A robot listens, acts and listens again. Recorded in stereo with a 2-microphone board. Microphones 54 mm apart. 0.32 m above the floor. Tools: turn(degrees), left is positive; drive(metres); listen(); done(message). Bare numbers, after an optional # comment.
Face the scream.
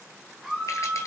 turn(-30)
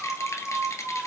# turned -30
# So it is at 140° right.
turn(-140)
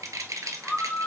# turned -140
# The scream is now 20° left.
turn(20)
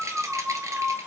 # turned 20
done("Facing the scream, 2 to 4 m away.")